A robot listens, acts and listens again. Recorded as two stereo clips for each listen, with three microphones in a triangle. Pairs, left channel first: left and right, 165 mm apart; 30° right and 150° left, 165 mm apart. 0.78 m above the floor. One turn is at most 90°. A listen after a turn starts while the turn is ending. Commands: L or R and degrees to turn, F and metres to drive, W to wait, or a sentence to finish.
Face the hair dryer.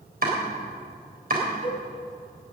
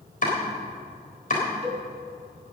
W
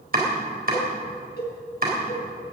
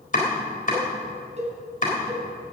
W
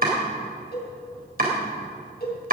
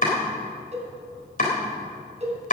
I can't make out a hair dryer to turn to.